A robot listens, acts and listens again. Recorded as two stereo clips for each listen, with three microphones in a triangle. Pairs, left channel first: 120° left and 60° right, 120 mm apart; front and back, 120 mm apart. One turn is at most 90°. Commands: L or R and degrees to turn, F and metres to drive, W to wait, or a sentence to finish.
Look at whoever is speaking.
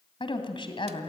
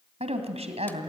L90
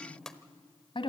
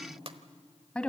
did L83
L80
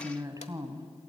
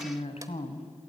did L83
Facing the woman speaking.